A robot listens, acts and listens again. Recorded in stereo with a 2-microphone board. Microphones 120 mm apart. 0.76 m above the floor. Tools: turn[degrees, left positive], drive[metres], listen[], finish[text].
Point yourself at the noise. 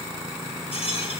Thought: The rattle: about 55° left or 125° left.
Action: turn[55]
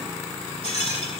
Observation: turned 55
Thought: So it is at 70° left.
Action: turn[70]
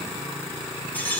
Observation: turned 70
Thought: The rattle is now 15° left.
Action: turn[15]
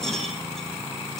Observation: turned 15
Action: finish[Found it: a rattle, straight ahead, over 4 m away.]